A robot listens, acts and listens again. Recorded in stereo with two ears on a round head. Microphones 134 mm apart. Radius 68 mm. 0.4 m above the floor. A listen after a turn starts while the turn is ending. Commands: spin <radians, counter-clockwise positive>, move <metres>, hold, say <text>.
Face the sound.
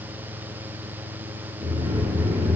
spin -0.44
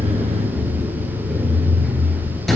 say Facing the sliding door.